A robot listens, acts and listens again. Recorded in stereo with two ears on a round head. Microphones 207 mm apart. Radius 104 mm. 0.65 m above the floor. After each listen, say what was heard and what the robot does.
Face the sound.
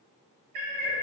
The cat meowing: about 40° right or 140° right. Turn 40° right.
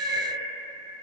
So it is at 95° right. Turn 95° right.
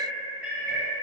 Found it: a cat meowing, straight ahead.